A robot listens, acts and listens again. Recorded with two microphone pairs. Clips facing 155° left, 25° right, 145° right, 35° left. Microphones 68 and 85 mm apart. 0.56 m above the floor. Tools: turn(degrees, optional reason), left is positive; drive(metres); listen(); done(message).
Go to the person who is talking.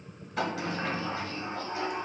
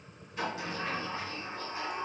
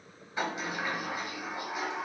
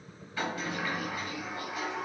listen()
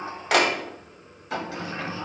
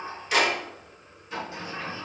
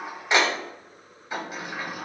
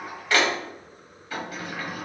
listen()
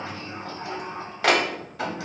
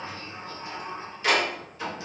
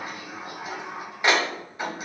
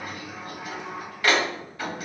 done("I can't make out anyone speaking to turn to.")